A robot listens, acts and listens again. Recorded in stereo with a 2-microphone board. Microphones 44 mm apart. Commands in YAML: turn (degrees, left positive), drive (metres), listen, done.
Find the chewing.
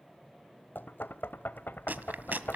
turn: -45
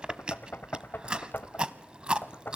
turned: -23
turn: -25
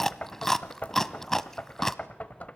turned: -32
turn: 10
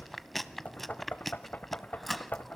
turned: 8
done: "Facing the chewing, under 1 m away."